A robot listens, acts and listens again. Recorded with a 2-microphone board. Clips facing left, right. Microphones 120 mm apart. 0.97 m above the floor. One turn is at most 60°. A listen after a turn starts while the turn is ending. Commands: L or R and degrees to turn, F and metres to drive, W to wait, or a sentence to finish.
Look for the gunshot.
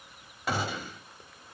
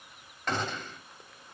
L30
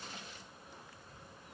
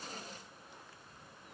W
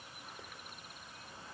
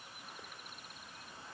I heard a gunshot, but can't make it out now. It was about 20° right or 140° left.